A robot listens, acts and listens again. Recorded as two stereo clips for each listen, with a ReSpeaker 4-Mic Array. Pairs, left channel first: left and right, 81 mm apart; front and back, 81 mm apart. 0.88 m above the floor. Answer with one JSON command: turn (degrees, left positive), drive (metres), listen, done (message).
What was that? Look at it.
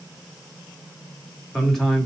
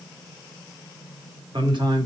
{"turn": 180}
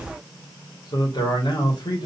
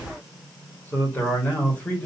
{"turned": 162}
{"turn": 80}
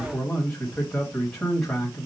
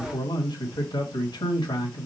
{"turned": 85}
{"done": "Facing the man speaking, 1 to 2 m away."}